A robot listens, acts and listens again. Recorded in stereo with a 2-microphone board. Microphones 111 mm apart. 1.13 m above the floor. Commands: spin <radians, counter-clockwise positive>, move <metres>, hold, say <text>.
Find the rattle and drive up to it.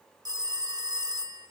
hold
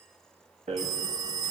spin -1.31
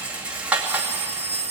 spin -0.17
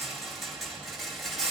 move 1.0
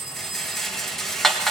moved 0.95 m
move 1.0
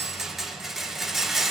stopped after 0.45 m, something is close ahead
say Arrived at the rattle, straight ahead.